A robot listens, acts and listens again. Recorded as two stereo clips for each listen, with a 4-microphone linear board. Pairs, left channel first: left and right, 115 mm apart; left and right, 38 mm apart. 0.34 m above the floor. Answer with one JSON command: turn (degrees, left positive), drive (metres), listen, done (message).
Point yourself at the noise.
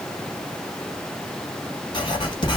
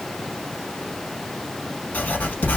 {"turn": 45}
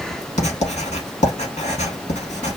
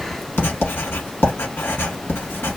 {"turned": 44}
{"turn": 90}
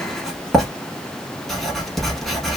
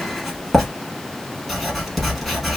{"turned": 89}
{"done": "Found it: writing, straight ahead."}